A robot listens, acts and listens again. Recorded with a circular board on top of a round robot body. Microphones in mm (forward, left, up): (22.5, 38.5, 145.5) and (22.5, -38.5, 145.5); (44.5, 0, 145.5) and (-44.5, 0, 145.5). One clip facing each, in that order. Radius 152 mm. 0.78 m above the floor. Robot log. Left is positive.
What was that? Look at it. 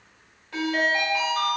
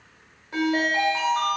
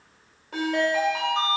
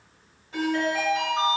note: The ringtone: 20° right.
cmd yaw -20
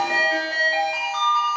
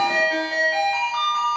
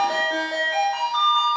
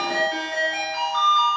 end: Facing the ringtone, 1 to 2 m away.